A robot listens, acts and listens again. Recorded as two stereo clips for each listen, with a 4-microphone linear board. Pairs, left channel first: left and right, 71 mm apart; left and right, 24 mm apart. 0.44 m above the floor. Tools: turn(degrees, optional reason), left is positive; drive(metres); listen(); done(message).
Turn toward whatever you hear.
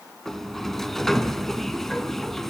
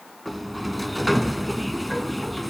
turn(degrees=30)
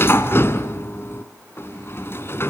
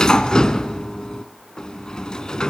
turn(degrees=145, reason="So it is at 145° left.")
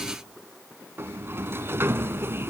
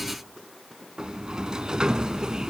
turn(degrees=-35, reason="The sliding door is now 35° right.")
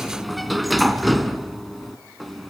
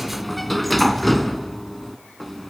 done("Found it: a sliding door, straight ahead, 1 to 2 m away.")